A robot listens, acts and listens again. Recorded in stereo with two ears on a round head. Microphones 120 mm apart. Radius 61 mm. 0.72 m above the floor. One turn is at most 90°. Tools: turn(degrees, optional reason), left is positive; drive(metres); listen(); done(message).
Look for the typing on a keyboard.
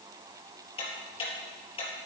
listen()
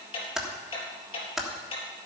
turn(degrees=-30)
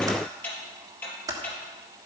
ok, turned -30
turn(degrees=-90, reason="So it is at 145° right.")
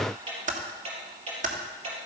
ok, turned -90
turn(degrees=-85, reason="The typing on a keyboard is now 85° right.")
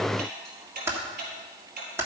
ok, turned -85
turn(degrees=-20, reason="The typing on a keyboard is now 20° right.")
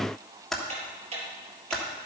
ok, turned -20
done("Facing the typing on a keyboard, 1 to 2 m away.")